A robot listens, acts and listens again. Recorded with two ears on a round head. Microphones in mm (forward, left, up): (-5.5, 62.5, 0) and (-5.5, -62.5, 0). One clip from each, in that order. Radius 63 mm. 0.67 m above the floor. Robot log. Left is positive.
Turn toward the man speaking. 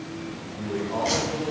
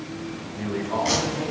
cmd yaw -90
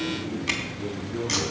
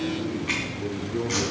note: So it is at 15° right.
cmd yaw -15
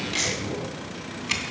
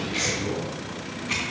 cmd idle
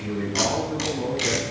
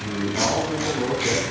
note: The man speaking is now 15° right.
cmd yaw -15
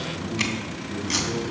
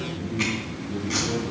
end: Found it: a man speaking, straight ahead, over 4 m away.